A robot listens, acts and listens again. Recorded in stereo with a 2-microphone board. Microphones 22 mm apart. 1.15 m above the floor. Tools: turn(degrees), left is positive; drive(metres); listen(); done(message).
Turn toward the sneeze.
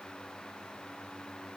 listen()
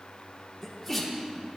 turn(degrees=30)
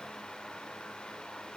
listen()
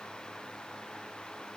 done("I heard a sneeze, but can't make it out now. It was about 25° right or 145° left.")